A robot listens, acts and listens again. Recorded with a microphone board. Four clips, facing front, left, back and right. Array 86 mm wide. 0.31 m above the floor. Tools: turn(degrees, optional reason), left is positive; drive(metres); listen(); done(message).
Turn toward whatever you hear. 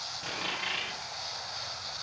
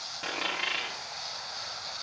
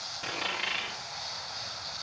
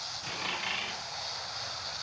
turn(degrees=90, reason="The dropped coin: 90° left.")
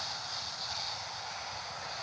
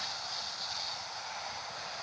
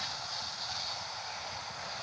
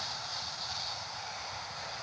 done("I heard a dropped coin from this way, but can't make it out now.")